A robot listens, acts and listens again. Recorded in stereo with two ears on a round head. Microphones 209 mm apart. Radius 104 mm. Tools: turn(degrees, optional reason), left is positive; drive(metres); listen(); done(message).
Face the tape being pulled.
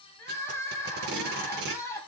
turn(degrees=-50, reason="The tape being pulled: about 50° right or 130° right.")
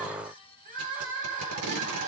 turn(degrees=-80, reason="So it is at 80° right.")
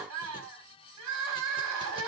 listen()
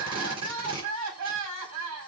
turn(degrees=-25, reason="The tape being pulled is now 25° right.")
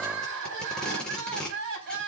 done("Found it: tape being pulled, straight ahead.")